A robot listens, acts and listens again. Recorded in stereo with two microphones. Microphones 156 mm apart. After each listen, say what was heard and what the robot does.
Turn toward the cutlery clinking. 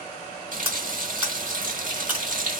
Turn 30° right.
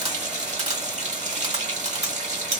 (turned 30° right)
So it is at 140° right. Turn 140° right.
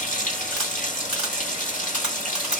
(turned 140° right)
Facing the cutlery clinking.